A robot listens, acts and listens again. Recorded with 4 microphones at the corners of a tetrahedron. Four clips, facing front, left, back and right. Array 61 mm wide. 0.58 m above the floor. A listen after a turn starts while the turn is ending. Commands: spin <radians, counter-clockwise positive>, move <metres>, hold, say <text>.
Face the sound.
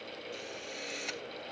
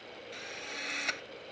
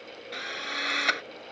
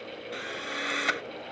spin -2.62
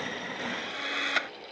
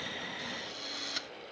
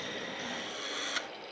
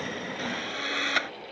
spin -0.96
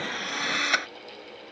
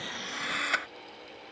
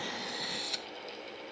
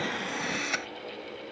spin 0.26
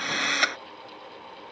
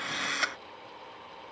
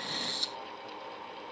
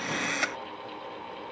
say Facing the drill.